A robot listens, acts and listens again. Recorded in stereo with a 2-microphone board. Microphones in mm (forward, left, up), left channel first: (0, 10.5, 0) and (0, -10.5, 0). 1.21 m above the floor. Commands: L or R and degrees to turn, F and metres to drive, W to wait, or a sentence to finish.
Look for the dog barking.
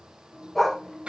L30
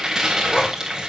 W
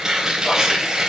W
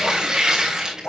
L110
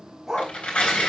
R10
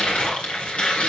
W
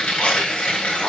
W
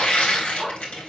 Facing the dog barking.